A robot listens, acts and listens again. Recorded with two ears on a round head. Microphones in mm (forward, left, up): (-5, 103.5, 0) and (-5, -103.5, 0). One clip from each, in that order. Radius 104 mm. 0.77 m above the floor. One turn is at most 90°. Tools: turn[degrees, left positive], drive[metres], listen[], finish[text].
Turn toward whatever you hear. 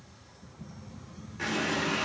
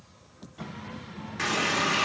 Thought: The running tap: about 55° right or 125° right.
Action: turn[-55]
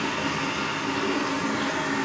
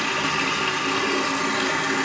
Thought: So it is at 70° right.
Action: turn[-70]
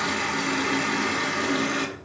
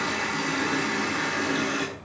Thought: The running tap is now 10° left.
Action: turn[10]
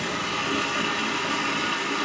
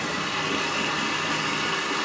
Action: finish[Facing the running tap.]